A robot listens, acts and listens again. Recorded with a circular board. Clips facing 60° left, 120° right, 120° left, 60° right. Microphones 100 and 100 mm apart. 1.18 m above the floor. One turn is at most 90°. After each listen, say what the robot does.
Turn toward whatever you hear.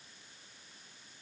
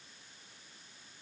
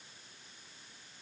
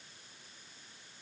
Keep listening.
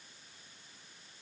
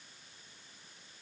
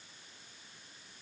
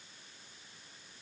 Keep listening.
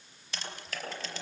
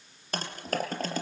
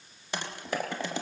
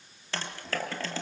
Turn 90° right.
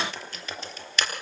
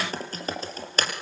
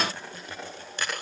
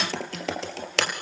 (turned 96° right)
Turn 70° right.
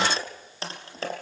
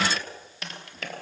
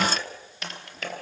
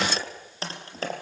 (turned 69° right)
Found it: typing on a keyboard, straight ahead.